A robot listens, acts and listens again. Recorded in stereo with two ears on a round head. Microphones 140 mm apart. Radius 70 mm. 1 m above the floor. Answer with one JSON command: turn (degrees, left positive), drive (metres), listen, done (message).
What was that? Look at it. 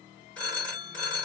{"turn": 30}
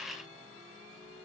{"listen": true}
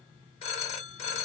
{"turn": 140}
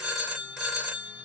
{"done": "Found it: a phone ringing, straight ahead, 1 to 2 m away."}